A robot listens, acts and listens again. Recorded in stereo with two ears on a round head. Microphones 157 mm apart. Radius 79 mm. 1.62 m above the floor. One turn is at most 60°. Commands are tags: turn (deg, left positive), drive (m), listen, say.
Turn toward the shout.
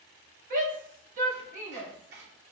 <turn deg="-50"/>
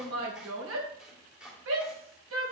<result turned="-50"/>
<turn deg="-60"/>
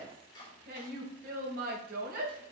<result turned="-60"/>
<turn deg="-50"/>
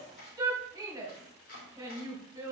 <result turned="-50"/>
<turn deg="-20"/>
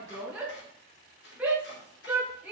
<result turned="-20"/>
<say>Found it: a shout, straight ahead, 2 to 4 m away.</say>